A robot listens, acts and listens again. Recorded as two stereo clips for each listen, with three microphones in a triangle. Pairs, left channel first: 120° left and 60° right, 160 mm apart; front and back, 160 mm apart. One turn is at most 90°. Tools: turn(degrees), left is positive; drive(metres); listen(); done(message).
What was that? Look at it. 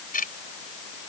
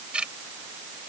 turn(degrees=90)
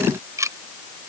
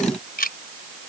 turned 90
turn(degrees=10)
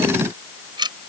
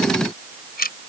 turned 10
done("Facing the ticking.")